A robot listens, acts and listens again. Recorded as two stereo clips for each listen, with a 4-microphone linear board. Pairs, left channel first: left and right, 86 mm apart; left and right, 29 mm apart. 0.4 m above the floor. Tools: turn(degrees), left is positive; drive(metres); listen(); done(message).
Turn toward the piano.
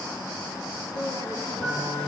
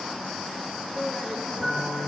turn(degrees=20)
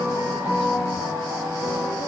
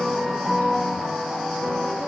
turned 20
turn(degrees=140)
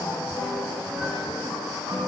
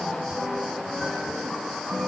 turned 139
done("Found it: a piano, straight ahead.")